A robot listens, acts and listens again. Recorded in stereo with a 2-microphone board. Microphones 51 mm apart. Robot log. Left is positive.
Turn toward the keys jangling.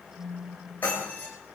cmd yaw +90
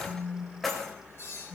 end: Found it: keys jangling, straight ahead, over 4 m away.